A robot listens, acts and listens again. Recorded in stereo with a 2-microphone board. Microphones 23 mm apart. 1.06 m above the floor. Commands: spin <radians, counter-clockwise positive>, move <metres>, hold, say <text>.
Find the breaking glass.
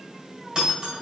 spin -0.61
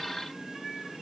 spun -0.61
hold
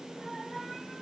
say I heard breaking glass, but can't make it out now. It was about straight ahead or 110° right.